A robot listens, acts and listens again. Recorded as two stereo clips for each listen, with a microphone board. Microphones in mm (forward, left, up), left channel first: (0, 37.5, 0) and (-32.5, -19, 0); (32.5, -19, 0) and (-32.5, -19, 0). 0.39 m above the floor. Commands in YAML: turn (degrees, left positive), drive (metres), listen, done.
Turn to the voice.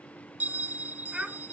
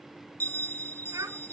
turn: 160
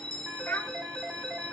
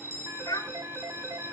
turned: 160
done: "Found it: a child speaking, straight ahead."